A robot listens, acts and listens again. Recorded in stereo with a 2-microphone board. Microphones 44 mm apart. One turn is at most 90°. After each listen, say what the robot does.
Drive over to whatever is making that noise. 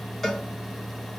Turn 30° left.
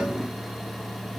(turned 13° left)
Keep listening.
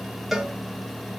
Drive 1.0 m forward.
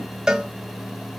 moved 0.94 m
Turn 15° right.
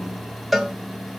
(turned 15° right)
Drive 1.0 m forward.
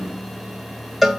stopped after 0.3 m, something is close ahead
Arrived at the cowbell, straight ahead.